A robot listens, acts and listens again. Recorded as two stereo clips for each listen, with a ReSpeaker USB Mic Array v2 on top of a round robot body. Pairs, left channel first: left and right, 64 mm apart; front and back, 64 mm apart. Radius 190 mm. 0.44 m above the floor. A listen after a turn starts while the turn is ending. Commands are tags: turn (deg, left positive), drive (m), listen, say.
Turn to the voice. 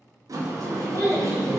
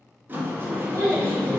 <turn deg="150"/>
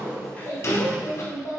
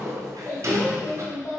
<turn deg="45"/>
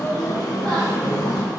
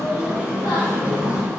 <listen/>
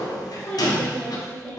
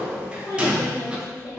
<turn deg="15"/>
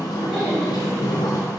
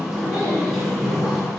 <listen/>
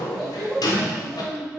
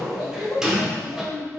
<say>Facing the child speaking, 1 to 2 m away.</say>